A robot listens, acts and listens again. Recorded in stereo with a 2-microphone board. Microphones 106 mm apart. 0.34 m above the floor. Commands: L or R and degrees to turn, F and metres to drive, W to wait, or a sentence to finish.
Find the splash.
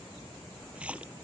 R30
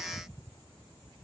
W
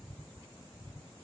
I heard a splash, but can't make it out now. It was about 20° left or 140° right.